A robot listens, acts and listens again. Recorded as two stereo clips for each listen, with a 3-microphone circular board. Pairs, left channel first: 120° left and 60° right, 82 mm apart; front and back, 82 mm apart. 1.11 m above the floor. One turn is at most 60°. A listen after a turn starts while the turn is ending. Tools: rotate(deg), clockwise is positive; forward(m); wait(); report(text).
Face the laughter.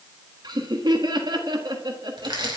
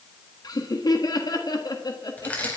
rotate(35)
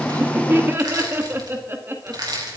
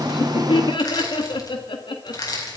report("Found it: laughter, straight ahead, 1 to 2 m away.")